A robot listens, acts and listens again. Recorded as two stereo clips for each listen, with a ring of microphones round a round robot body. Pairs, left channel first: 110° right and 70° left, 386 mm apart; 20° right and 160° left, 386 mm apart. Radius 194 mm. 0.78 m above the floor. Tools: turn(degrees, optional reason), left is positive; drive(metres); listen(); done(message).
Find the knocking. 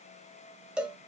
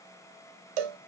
listen()
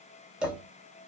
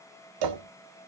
turn(degrees=-170, reason="The knocking: 170° right.")
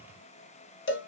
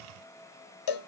listen()
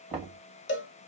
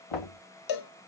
turn(degrees=-15, reason="The knocking is now 15° right.")
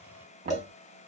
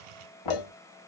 done("Found it: knocking, straight ahead.")